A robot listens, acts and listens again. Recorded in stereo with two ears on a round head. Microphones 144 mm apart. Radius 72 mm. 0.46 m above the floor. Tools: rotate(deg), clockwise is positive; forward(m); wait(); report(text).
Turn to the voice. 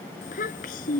rotate(-55)
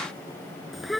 report("Facing the child speaking.")